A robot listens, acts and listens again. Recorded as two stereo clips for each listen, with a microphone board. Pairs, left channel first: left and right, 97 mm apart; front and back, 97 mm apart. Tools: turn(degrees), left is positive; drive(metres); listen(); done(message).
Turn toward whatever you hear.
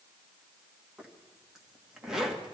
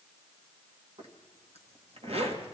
turn(degrees=-175)
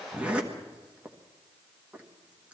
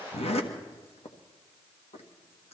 turn(degrees=-10)
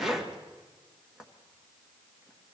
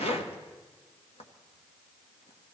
done("Facing the zipper, 1 to 2 m away.")